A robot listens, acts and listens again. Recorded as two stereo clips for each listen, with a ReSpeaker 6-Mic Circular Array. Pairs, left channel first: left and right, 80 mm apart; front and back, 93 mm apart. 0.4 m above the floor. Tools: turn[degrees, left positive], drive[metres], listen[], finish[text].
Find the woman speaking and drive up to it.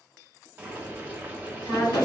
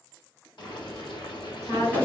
Thought: The woman speaking: 35° left.
Action: turn[35]
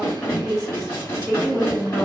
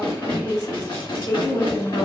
Action: drive[1.0]
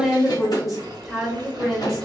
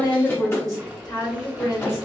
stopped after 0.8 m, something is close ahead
Action: finish[I am next to the woman speaking.]